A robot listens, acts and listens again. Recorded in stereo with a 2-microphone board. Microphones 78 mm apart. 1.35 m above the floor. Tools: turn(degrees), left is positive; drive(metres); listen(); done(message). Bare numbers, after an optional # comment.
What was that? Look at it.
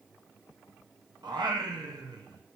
# The singing: about 70° right or 110° right.
turn(-70)
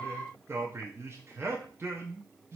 # So it is at 35° right.
turn(-35)
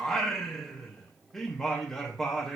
done("Found it: singing, straight ahead, under 1 m away.")